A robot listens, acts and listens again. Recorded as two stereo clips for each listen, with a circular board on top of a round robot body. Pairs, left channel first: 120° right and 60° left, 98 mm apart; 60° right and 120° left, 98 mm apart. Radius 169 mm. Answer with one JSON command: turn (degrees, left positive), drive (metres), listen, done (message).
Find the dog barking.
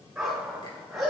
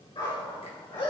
{"turn": -25}
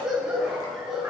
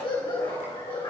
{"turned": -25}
{"turn": -25}
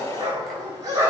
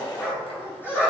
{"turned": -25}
{"turn": 10}
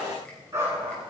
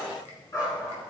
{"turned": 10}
{"done": "Found it: a dog barking, straight ahead, over 4 m away."}